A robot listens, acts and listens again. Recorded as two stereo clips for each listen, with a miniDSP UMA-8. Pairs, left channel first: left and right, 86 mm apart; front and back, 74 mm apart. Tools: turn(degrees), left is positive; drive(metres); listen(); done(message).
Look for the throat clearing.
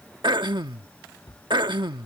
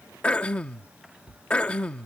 turn(degrees=-75)
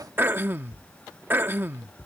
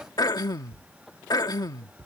turn(degrees=-25)
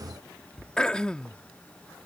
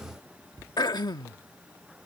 turn(degrees=10)
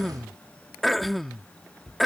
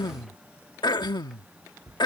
done("Found it: throat clearing, straight ahead.")